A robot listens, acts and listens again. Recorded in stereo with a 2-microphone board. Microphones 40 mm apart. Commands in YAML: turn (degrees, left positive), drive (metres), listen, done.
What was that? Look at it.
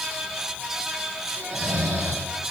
turn: -65
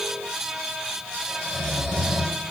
done: "Found it: snoring, straight ahead, 2 to 4 m away."